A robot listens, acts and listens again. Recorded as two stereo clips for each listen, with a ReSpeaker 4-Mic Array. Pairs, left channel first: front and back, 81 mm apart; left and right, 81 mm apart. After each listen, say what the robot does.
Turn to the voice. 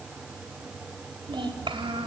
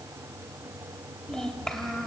Turn 175° left.
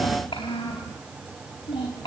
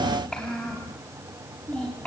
Turn 15° left.
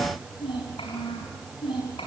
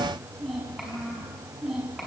Found it: a child speaking, straight ahead, over 4 m away.